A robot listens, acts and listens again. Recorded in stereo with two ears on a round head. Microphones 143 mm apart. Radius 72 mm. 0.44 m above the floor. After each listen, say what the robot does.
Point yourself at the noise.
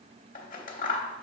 Turn 55° left.
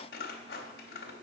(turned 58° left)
Turn 70° left.
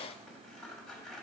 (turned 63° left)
Facing the scissors, under 1 m away.